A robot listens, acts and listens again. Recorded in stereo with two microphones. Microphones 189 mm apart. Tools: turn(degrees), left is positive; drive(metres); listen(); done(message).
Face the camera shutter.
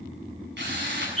listen()
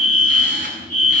listen()
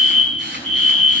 done("I can't make out a camera shutter, only a drill and a fire alarm.")